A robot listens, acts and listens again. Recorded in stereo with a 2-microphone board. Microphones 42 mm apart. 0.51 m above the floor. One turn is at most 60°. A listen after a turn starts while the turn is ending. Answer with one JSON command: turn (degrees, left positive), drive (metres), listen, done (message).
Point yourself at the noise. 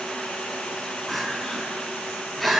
{"turn": 30}
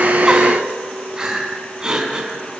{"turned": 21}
{"turn": -15}
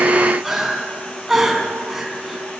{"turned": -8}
{"done": "Found it: crying, straight ahead."}